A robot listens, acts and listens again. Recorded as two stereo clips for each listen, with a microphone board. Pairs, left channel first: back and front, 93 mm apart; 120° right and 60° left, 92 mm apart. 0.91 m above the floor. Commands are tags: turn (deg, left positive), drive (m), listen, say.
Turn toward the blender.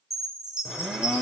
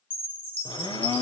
<turn deg="-95"/>
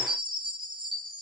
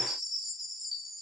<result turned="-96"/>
<listen/>
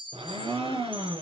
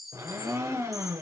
<say>Facing the blender, over 4 m away.</say>